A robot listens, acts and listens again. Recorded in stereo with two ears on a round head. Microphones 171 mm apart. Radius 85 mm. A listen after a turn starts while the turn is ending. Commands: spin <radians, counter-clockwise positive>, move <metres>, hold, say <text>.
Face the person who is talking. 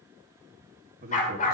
spin -0.79
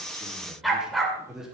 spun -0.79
say Facing the man speaking.